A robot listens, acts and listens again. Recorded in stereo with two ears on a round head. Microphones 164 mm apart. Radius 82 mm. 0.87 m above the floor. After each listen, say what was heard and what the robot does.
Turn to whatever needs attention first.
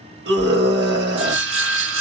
The scream: about 60° right or 120° right. Turn 60° right.
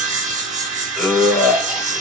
Facing the scream, 1 to 2 m away.